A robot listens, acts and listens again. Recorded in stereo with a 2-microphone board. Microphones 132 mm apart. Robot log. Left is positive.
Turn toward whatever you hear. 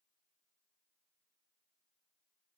cmd idle
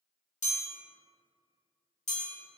note: The chime: about 65° left or 115° left.
cmd yaw +65
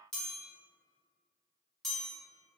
end: Facing the chime, 1 to 2 m away.